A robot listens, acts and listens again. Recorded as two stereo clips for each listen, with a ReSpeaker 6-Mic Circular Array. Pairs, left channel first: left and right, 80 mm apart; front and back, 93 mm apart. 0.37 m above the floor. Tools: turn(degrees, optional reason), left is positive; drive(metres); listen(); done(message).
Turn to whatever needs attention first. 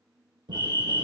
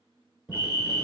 turn(degrees=135, reason="The fire alarm: 135° left.")
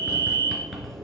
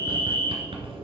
turn(degrees=55, reason="The fire alarm is now 55° left.")
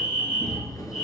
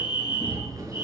turn(degrees=10, reason="The fire alarm is now 10° left.")
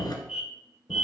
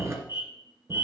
done("Facing the fire alarm.")